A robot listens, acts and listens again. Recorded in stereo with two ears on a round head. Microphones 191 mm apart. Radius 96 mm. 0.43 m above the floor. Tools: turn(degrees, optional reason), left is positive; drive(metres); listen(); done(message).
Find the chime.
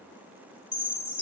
turn(degrees=-30)
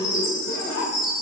turn(degrees=20, reason="So it is at 20° left.")
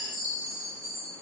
done("Facing the chime, 1 to 2 m away.")